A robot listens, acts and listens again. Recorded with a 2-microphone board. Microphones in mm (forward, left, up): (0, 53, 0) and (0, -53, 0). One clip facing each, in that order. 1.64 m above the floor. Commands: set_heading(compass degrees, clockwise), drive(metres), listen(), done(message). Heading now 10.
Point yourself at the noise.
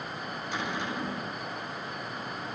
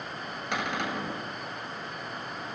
set_heading(80)
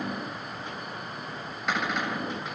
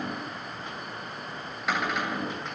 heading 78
done("Found it: a cupboard door, straight ahead, over 4 m away.")